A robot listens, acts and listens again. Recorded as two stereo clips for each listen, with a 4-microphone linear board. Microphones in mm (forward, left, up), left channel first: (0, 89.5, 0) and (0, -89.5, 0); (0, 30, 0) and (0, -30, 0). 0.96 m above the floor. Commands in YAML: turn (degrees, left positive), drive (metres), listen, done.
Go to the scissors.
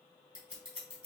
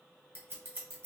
turn: -40
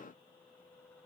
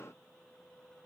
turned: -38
listen: true
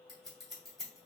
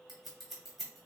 drive: 1.0
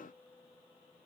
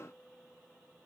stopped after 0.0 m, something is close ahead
listen: true
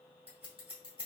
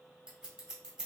turn: -10
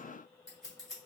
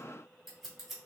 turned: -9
done: "Something is in my way. I am facing the scissors but have not reached it."